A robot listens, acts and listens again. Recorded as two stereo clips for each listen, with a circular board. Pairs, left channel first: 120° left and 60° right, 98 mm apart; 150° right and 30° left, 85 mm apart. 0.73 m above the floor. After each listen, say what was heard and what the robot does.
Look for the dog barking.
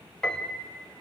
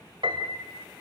Keep listening.
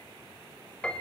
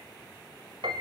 Keep listening.
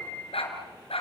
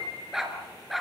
The dog barking: 120° left. Turn 120° left.
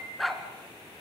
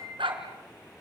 The dog barking is now 30° left. Turn 30° left.
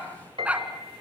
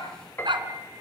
The dog barking is now 15° left. Turn 15° left.
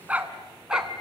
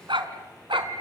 The dog barking is now 25° left. Turn 25° left.
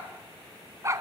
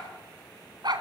Facing the dog barking, 2 to 4 m away.